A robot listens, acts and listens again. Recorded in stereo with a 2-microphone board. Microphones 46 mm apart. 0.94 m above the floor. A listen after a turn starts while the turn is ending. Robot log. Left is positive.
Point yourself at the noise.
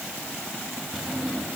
cmd yaw +30
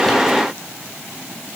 cmd idle
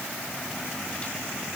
cmd idle
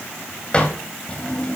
note: So it is at 150° left.
cmd yaw +150
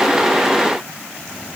cmd idle
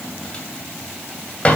note: The drawer is now 25° left.
cmd yaw +25
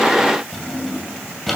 end: Facing the drawer.